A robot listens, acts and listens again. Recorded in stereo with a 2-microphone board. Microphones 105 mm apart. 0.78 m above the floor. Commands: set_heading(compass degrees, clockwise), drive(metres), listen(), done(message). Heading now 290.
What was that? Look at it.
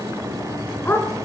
set_heading(270)
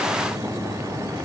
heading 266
listen()
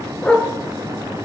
set_heading(236)
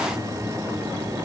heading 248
listen()
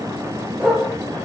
set_heading(218)
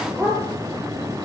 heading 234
done("Found it: a dog barking, straight ahead.")